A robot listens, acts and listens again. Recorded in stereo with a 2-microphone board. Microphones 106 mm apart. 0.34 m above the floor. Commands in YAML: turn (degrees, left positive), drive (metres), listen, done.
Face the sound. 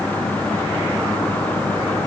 listen: true
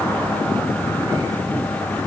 listen: true
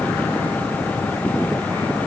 done: "I can't make out anything."